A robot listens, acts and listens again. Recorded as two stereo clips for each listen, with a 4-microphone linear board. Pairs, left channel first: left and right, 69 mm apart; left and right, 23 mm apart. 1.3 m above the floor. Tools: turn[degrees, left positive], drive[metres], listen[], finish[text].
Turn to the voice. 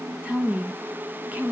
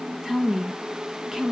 Thought: The woman speaking: about 20° right or 160° right.
Action: turn[-20]
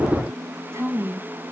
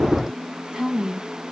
Thought: So it is at 140° right.
Action: turn[-140]
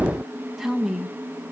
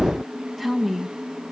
Action: finish[Found it: a woman speaking, straight ahead.]